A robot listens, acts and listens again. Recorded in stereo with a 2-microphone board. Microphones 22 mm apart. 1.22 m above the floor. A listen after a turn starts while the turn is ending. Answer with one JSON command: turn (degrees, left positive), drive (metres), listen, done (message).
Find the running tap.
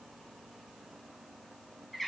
{"listen": true}
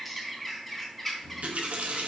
{"turn": -90}
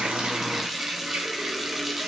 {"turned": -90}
{"turn": -10}
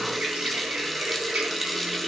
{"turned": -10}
{"done": "Found it: a running tap, straight ahead."}